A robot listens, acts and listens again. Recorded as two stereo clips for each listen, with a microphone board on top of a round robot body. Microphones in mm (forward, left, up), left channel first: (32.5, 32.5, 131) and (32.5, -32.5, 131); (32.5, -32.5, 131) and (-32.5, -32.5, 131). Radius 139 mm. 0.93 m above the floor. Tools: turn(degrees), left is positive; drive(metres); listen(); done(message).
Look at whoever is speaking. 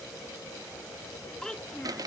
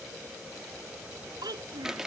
turn(degrees=170)
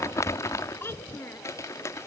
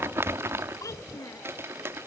turn(degrees=40)
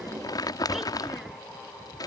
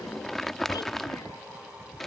listen()
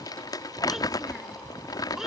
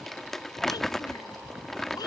listen()
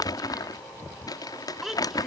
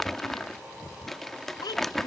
done("Facing the child speaking.")